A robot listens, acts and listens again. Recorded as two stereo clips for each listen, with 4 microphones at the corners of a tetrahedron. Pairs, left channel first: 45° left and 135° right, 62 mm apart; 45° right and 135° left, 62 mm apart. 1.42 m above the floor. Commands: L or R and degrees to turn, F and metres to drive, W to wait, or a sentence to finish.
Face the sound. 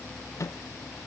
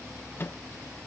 L10
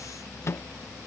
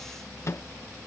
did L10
Facing the microwave.